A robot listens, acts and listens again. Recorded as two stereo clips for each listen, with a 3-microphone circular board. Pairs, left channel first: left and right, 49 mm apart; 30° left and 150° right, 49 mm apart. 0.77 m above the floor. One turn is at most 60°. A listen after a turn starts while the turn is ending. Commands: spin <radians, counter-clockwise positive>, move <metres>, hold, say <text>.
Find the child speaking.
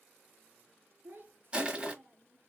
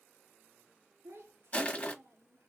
spin -1.05
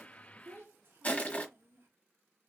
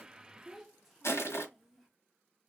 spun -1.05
spin -1.05
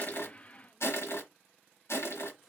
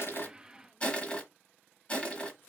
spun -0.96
spin -0.17
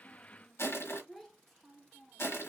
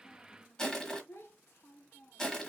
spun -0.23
say Facing the child speaking.